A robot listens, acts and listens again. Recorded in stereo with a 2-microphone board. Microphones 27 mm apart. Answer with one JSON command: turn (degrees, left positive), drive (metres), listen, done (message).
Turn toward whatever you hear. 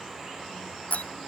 {"turn": 70}
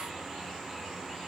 {"listen": true}
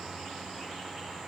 {"done": "I heard a door slam, but can't make it out now. It was about straight ahead or 40° left."}